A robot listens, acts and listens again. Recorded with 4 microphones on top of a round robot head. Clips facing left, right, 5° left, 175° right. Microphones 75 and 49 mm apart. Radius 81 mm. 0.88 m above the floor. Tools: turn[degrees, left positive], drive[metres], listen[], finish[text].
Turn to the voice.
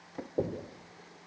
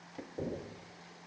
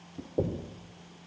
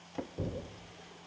Action: listen[]
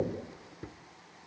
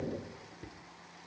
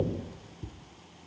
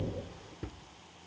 Action: listen[]
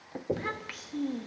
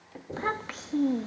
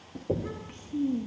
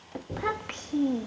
Thought: The child speaking: 150° right.
Action: turn[-150]
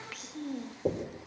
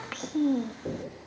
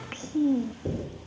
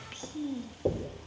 Thought: The child speaking is now 50° right.
Action: turn[-50]
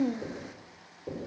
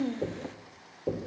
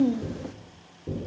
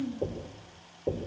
Thought: The child speaking is now 15° left.
Action: turn[15]
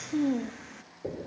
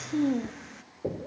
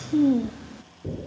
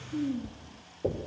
Action: finish[Found it: a child speaking, straight ahead.]